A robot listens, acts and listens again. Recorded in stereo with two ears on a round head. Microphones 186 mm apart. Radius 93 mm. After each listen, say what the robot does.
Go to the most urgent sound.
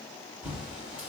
Keep listening.
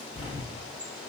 Keep listening.
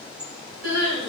Turn 70° right.
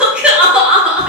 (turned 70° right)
Drive 1.0 m forward.
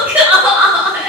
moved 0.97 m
Turn 10° right.
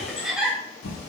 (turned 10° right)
Drive 1.0 m forward.
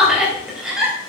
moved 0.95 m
Drive 1.0 m forward.
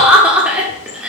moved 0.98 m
Turn 10° right.
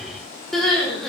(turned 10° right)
Drive 1.0 m forward.
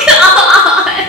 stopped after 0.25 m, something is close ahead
I am next to the crying.